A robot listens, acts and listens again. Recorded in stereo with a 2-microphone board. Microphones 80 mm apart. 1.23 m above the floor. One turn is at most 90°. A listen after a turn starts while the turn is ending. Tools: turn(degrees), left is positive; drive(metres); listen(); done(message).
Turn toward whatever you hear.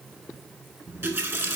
turn(degrees=-35)
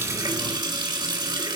turn(degrees=-90)
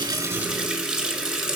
done("Found it: a running tap, straight ahead.")